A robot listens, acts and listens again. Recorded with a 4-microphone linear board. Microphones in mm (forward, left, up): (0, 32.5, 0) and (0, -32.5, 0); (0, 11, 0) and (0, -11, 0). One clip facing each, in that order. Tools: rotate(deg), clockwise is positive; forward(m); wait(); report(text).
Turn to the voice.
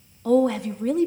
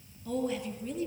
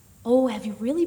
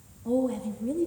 rotate(-90)
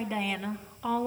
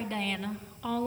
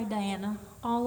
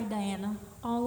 rotate(-10)
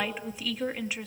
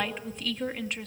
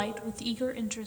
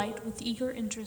report("Facing the woman speaking, 2 to 4 m away.")